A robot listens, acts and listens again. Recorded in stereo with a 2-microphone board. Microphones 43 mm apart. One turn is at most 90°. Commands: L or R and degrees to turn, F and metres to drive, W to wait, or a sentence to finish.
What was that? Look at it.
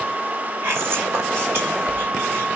R65
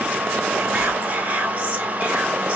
R30
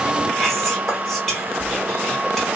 L10
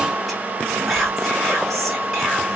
Facing the whispering.